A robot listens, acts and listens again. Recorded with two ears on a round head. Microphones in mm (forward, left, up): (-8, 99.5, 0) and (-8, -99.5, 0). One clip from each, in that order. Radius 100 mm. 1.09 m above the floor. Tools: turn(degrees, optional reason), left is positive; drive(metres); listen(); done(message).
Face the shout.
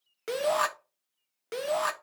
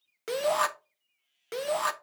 turn(degrees=-30)
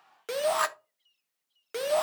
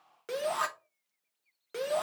turn(degrees=25, reason="So it is at 25° left.")
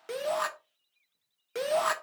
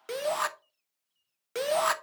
turn(degrees=-15, reason="The shout is now 15° right.")
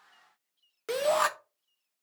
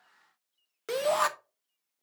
done("Found it: a shout, straight ahead.")